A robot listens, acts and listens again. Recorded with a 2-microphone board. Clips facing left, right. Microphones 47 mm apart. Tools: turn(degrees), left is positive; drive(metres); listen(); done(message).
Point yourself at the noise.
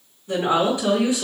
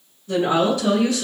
turn(degrees=20)
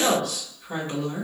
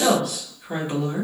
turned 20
turn(degrees=-10)
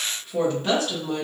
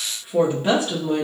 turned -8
turn(degrees=-25)
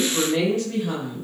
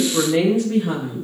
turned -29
turn(degrees=-25)
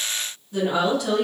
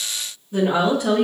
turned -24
turn(degrees=-20)
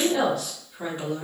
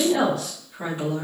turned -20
done("Facing the woman speaking, 1 to 2 m away.")